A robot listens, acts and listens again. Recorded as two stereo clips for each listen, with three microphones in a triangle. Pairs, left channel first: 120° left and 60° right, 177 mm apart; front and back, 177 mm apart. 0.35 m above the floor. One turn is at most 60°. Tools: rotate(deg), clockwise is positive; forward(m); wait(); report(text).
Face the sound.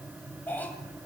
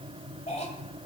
rotate(-40)
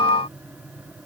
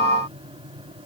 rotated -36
wait()
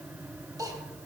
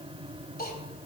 report("Found it: a cough, straight ahead.")